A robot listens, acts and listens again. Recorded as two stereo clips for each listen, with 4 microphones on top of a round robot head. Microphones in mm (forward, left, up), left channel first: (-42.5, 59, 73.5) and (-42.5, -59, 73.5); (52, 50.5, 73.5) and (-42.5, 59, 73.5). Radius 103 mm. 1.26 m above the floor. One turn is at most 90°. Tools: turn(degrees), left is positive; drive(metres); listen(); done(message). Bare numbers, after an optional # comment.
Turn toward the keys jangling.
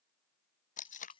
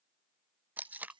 # The keys jangling: 140° left.
turn(90)
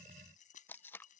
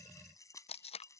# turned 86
# The keys jangling is now 55° left.
turn(55)
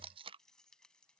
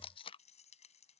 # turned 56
done("Found it: keys jangling, straight ahead.")